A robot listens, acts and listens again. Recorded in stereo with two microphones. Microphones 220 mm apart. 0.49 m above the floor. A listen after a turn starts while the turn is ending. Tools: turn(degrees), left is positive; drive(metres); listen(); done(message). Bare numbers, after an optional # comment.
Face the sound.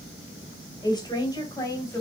turn(30)
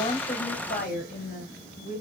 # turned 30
# So it is at 140° left.
turn(140)
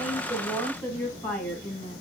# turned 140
# The woman speaking is now 10° left.
turn(10)
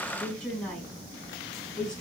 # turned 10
done("Found it: a woman speaking, straight ahead.")